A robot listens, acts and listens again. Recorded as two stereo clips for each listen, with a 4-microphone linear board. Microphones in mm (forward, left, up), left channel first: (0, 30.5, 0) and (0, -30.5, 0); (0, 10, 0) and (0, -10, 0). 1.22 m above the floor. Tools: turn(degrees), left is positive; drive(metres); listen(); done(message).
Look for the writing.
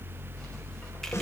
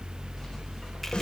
listen()
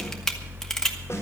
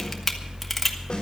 listen()
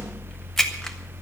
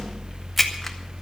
done("I can't make out writing, only a camera shutter.")